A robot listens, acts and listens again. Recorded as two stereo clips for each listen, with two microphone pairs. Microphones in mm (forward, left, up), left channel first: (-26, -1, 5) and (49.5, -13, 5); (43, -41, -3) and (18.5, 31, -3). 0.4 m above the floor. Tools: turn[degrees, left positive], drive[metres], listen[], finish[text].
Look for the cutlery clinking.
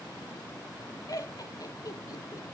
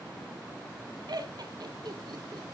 Action: listen[]
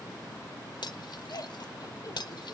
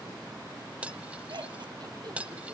Thought: The cutlery clinking: 175° right.
Action: turn[-175]
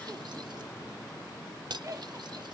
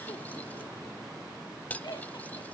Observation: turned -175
Action: finish[Facing the cutlery clinking.]